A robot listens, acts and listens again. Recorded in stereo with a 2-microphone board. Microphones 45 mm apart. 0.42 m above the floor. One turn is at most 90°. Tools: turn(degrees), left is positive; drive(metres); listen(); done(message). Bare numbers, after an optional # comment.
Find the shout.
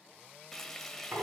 listen()
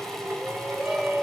# The shout: about 30° right or 150° right.
turn(-30)
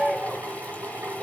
done("Facing the shout, 2 to 4 m away.")